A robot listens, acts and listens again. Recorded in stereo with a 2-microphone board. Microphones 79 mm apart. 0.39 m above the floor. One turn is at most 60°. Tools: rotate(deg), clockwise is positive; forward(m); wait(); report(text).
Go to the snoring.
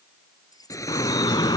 rotate(-45)
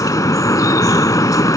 wait()
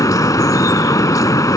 wait()
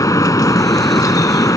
report("I heard snoring, but can't make it out now. It was about straight ahead or 90° left. I did not reach it.")